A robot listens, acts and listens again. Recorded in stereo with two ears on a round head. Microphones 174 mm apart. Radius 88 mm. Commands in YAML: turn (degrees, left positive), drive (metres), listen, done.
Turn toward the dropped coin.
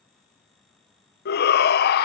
listen: true
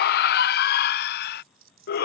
turn: -75
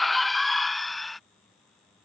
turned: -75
listen: true
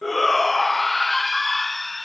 done: "I heard a dropped coin, but can't make it out now. It was about straight ahead or 30° right."